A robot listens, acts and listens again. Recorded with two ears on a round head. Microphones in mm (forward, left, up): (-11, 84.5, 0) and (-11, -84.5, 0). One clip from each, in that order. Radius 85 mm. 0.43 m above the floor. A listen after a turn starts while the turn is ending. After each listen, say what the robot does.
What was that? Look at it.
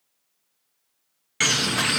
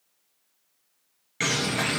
Turn 45° left.
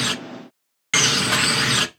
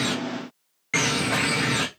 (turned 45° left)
Turn 85° left.
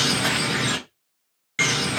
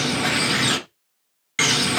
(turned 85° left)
Turn 10° right.
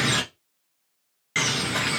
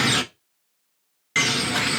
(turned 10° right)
Found it: a bird, straight ahead, under 1 m away.